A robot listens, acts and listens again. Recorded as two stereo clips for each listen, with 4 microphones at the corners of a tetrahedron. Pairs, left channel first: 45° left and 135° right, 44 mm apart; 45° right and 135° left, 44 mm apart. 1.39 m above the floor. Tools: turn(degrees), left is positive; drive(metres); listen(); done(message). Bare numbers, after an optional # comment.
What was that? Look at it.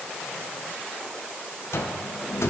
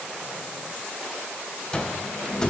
# The cupboard door: 25° left.
turn(25)
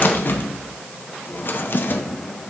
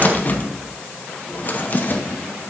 done("Found it: a cupboard door, straight ahead.")